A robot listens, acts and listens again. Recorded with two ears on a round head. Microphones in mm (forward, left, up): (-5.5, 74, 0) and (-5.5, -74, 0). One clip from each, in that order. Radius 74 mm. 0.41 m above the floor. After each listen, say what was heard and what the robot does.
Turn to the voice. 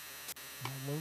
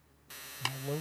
The man speaking: about 45° right or 135° right. Turn 45° right.
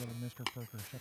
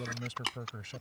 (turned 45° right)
So it is at 80° right. Turn 80° right.
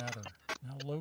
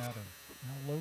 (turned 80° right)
The man speaking is now 15° left. Turn 15° left.
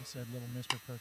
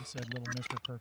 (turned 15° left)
Facing the man speaking.